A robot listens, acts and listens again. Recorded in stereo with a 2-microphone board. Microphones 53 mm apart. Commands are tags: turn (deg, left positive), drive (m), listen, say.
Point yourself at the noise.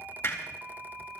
<turn deg="45"/>
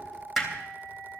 <say>Found it: hammering, straight ahead.</say>